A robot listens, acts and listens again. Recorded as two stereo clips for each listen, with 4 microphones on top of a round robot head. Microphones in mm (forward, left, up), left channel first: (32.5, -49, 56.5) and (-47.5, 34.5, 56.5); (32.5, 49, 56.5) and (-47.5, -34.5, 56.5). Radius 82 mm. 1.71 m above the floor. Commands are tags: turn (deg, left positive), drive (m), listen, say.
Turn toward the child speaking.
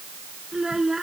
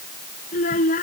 <turn deg="50"/>
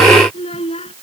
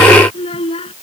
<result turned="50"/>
<say>Found it: a child speaking, straight ahead.</say>